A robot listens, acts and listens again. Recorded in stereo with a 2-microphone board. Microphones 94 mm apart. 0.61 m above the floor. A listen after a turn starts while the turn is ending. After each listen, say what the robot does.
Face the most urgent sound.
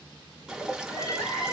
Turn 30° left.
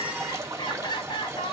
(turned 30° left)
Turn 115° left.
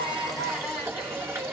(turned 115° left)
Facing the crying.